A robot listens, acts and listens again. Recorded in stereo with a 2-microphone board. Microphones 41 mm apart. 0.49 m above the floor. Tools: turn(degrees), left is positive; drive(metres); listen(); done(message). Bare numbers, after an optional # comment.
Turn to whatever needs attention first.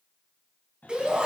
# The shout: about 20° right or 160° right.
turn(-20)
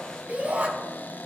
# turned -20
# So it is at 140° right.
turn(-140)
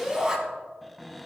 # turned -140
# The shout is now 20° right.
turn(-20)
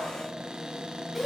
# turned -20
done("Facing the shout.")